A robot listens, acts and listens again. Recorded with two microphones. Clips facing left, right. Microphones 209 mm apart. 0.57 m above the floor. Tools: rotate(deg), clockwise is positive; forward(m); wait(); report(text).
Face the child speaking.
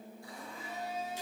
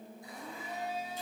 wait()
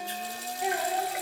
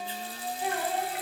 rotate(-15)
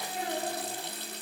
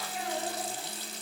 rotate(-30)
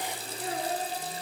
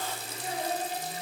rotate(-120)
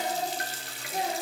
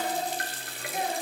rotate(-35)
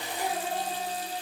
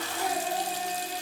wait()
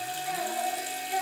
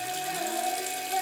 report("Facing the child speaking, over 4 m away.")